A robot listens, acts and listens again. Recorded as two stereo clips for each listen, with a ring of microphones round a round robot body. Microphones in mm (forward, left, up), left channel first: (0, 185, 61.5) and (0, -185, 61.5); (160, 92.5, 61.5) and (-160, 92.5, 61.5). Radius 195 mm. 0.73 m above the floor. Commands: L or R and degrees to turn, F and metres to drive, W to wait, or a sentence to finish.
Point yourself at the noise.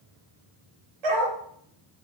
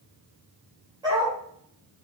R100
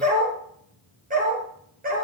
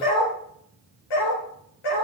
R20
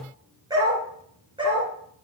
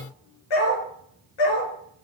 R15
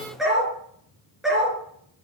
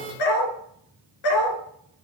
Found it: a dog barking, straight ahead, 2 to 4 m away.